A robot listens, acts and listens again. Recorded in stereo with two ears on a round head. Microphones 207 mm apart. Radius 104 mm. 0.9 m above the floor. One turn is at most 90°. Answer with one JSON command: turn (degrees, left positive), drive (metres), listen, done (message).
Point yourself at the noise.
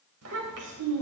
{"turn": -90}
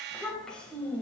{"turn": 10}
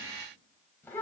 {"turn": 10}
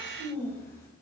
{"turn": 10}
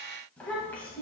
{"turn": 10}
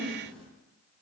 {"done": "Facing the child speaking."}